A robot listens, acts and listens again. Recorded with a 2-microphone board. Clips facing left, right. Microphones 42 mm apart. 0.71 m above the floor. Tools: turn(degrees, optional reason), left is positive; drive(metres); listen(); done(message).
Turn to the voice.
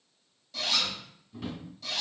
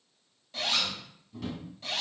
listen()
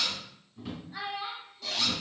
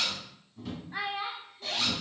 turn(degrees=-50, reason="The child speaking: about 50° right or 130° right.")
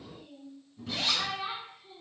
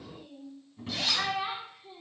turn(degrees=-75, reason="So it is at 75° right.")
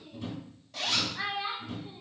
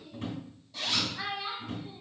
turn(degrees=20, reason="The child speaking is now 20° left.")
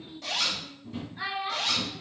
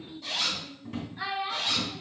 done("Facing the child speaking, 1 to 2 m away.")